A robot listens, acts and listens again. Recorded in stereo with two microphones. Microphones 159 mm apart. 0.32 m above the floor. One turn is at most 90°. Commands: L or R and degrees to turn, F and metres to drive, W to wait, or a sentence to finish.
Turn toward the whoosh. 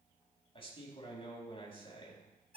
W
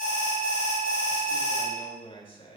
W
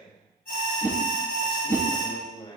R20
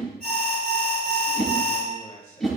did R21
Facing the whoosh.